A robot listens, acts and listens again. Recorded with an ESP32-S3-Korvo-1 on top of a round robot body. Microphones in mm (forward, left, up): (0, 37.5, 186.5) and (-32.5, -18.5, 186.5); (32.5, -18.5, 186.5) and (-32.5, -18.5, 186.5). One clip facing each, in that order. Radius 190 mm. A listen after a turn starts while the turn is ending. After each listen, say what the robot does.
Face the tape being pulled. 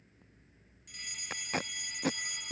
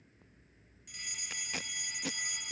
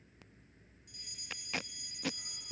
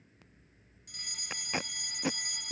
Turn 115° left.
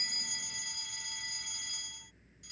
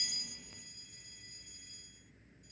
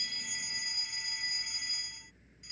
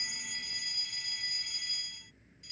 Keep listening.
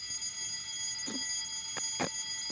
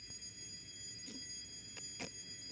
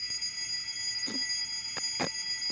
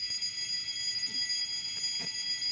Turn 30° left.
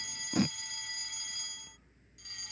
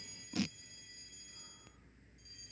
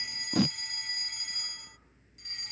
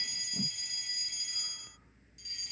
Turn 10° left.
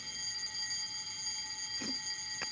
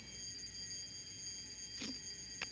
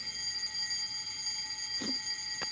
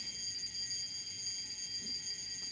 Keep listening.
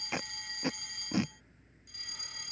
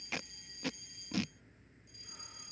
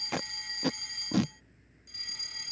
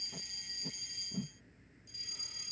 Facing the tape being pulled.